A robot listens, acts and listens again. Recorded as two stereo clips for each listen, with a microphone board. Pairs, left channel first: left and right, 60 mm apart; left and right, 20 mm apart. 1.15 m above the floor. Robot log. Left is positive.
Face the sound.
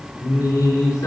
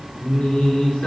cmd yaw +90
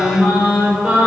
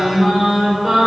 note: So it is at 20° right.
cmd yaw -20
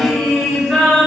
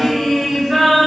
end: Facing the singing.